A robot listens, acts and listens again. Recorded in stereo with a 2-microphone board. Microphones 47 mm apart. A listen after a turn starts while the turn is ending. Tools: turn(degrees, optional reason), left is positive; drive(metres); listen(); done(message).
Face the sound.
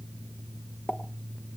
turn(degrees=35, reason="The pop: about 35° left or 145° left.")
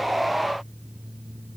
listen()
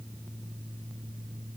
done("I heard a pop, but can't make it out now. It was about straight ahead or 110° left.")